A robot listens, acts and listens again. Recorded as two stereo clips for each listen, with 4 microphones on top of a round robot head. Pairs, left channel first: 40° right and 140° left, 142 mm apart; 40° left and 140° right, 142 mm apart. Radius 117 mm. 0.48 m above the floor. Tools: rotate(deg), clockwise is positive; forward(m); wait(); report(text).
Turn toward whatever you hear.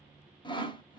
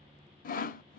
rotate(-15)
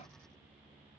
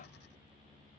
wait()
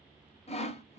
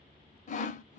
report("Found it: sawing, straight ahead.")